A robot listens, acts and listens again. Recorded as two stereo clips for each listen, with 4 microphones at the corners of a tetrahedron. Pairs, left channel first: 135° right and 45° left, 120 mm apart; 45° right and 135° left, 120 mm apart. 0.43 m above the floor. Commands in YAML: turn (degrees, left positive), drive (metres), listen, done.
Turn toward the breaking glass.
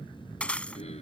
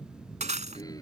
turn: 145
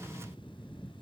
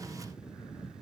done: "Facing where the breaking glass came from. I can't hear it now."